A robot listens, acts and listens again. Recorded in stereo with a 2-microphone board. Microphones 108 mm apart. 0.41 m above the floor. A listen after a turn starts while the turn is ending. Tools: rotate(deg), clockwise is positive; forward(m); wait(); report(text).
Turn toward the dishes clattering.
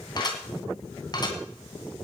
rotate(-40)
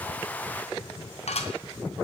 rotate(-100)
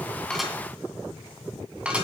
rotate(10)
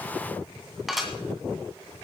report("Found it: dishes clattering, straight ahead, 2 to 4 m away.")